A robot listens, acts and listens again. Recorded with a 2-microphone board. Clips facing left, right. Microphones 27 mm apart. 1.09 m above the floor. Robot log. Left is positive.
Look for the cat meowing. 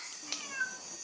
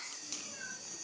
note: The cat meowing: about 70° left or 110° left.
cmd yaw +70
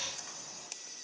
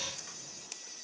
cmd idle
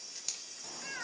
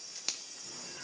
note: So it is at 55° left.
cmd yaw +55
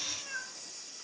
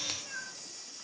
note: The cat meowing is now 20° left.
cmd yaw +20
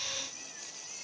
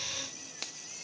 cmd idle
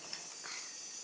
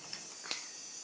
cmd idle
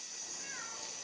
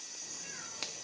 note: The cat meowing is now 20° left.
cmd yaw +20
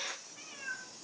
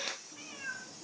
end: Found it: a cat meowing, straight ahead, 2 to 4 m away.